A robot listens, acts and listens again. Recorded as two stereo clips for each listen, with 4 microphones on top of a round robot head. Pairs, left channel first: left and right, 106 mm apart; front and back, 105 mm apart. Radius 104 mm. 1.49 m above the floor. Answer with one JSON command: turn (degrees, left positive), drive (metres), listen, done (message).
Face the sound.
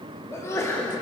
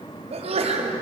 {"turn": 160}
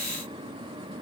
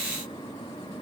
{"done": "Facing where the sneeze came from. I can't hear it now."}